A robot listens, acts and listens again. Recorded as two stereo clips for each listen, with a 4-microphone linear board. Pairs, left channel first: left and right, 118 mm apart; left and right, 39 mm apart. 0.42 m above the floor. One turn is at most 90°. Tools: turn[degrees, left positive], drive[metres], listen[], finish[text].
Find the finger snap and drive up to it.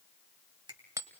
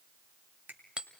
Thought: The finger snap: about 45° right or 135° right.
Action: turn[-45]
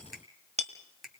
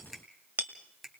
Action: drive[1.0]
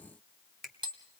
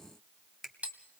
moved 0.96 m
Action: drive[1.0]
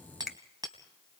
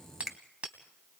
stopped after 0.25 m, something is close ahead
Action: finish[I am next to the finger snap.]